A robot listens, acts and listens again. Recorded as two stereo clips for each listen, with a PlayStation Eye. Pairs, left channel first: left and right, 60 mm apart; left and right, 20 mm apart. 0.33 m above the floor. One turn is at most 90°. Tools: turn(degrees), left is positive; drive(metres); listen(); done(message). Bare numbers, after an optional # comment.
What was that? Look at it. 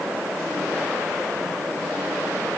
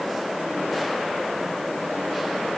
listen()
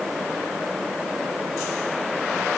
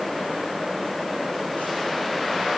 listen()
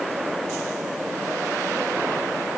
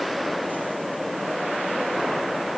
done("I can't make out anything to turn to.")